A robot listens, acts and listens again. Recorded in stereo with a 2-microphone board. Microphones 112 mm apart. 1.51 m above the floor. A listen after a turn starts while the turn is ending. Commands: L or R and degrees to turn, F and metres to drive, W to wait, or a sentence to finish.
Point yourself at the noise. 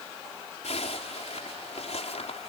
L70
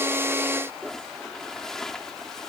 Facing the zipper.